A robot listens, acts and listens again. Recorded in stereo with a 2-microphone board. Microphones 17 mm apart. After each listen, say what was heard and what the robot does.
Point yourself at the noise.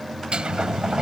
Turn 90° right.
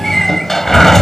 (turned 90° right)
So it is at 15° left. Turn 15° left.
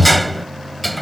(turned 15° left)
Facing the sliding door.